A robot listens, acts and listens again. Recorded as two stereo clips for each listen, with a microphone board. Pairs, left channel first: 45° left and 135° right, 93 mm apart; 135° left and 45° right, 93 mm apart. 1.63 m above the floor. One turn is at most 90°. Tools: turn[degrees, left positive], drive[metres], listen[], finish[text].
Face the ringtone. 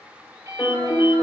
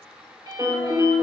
Thought: The ringtone: 85° right.
Action: turn[-85]
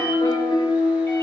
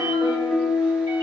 Action: listen[]
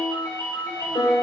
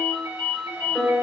Thought: The ringtone is now 15° right.
Action: turn[-15]
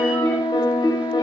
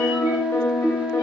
Action: listen[]
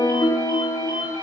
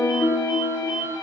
Action: finish[Facing the ringtone.]